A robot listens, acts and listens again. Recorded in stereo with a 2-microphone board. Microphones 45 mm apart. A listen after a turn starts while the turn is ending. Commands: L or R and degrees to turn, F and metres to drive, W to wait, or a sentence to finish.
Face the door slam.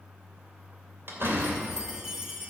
R65
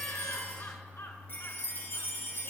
W
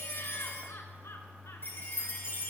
I heard a door slam, but can't make it out now. It was about straight ahead or 50° right.